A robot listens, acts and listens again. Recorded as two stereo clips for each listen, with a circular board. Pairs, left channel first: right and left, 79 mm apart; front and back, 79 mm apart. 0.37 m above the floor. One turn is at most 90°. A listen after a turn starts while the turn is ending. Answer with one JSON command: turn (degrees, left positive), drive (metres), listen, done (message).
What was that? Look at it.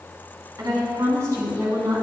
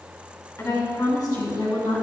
{"turn": 35}
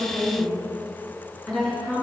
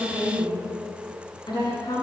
{"turn": -10}
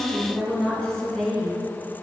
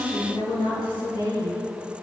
{"turn": -10}
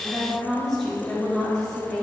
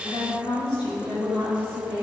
{"done": "Found it: a woman speaking, straight ahead."}